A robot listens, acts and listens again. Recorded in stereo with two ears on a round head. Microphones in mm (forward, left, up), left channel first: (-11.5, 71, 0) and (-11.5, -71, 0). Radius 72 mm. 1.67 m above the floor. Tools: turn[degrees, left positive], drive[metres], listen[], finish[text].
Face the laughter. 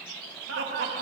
Action: turn[-90]
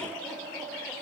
Action: finish[Found it: laughter, straight ahead.]